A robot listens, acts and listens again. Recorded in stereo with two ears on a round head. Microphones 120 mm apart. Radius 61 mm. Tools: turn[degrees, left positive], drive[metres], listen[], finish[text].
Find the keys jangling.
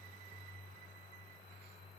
Action: listen[]
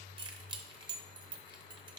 Thought: The keys jangling: about 35° right or 145° right.
Action: turn[-35]
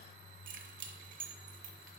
Thought: So it is at 110° right.
Action: turn[-110]
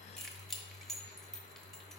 Action: finish[Facing the keys jangling.]